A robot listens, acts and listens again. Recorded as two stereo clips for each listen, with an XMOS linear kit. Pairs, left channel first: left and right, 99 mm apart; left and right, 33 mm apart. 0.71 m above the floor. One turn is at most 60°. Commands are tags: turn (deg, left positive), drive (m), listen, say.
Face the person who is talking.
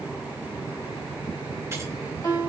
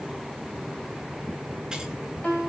<listen/>
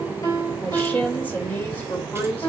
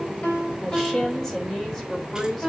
<turn deg="15"/>
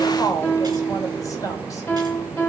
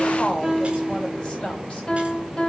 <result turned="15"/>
<turn deg="60"/>
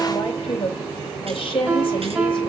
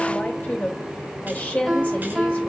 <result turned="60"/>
<turn deg="60"/>
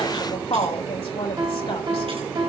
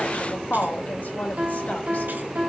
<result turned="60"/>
<turn deg="60"/>
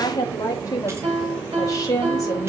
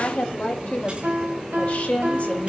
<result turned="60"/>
<turn deg="35"/>
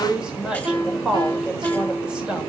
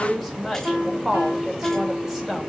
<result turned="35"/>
<turn deg="-10"/>
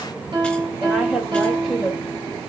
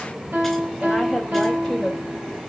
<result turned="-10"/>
<say>Found it: a woman speaking, straight ahead.</say>